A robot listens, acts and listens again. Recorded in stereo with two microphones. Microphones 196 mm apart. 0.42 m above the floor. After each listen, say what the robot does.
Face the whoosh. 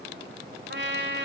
Keep listening.
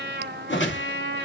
Turn 75° left.
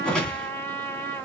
Found it: a whoosh, straight ahead, 2 to 4 m away.